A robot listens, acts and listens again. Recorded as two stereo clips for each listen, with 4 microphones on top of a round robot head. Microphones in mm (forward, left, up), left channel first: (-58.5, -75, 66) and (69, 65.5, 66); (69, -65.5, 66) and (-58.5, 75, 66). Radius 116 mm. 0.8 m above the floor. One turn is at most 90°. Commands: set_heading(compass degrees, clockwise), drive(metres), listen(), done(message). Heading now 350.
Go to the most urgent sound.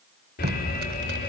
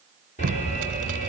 set_heading(80)
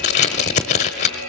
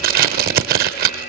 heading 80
set_heading(90)
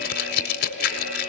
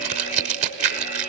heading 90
drive(1.0)
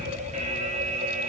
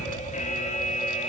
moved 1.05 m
drive(1.0)
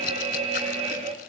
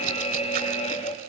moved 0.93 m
drive(1.0)
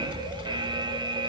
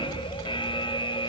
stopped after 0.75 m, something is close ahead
done("Arrived at the alarm, straight ahead.")